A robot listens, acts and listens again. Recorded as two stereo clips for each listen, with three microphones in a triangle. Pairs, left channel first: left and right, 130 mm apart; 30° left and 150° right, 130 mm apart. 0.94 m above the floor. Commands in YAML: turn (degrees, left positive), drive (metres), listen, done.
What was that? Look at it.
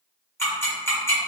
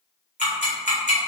turn: 20
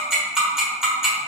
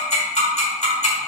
done: "Found it: ticking, straight ahead, 1 to 2 m away."